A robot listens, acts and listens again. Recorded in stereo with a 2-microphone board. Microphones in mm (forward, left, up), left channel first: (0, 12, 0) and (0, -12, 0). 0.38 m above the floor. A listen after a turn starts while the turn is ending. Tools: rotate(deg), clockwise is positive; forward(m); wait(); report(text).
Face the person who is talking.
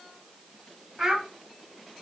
rotate(30)
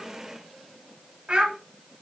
rotate(145)
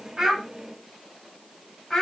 report("Found it: a child speaking, straight ahead, 1 to 2 m away.")